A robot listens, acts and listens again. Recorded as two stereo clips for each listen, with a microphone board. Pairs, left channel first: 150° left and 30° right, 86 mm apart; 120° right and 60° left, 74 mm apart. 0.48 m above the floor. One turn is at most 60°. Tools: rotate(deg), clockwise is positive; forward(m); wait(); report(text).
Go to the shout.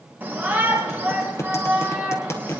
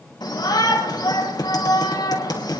rotate(60)
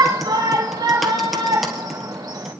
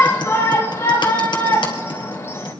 rotate(60)
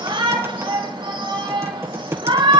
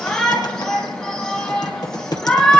rotate(40)
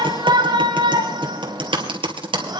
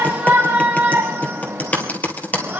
forward(1.0)
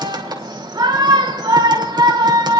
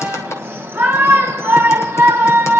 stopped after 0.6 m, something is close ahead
report("Something is in my way. I am facing the shout but have not reached it.")